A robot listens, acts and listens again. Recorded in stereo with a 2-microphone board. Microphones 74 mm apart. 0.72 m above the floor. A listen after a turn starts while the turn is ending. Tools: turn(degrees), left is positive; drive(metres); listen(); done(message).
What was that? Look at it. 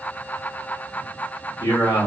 turn(degrees=65)
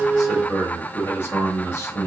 turn(degrees=40)
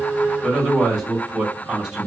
turn(degrees=-10)
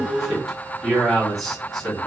done("Facing the man speaking, 1 to 2 m away.")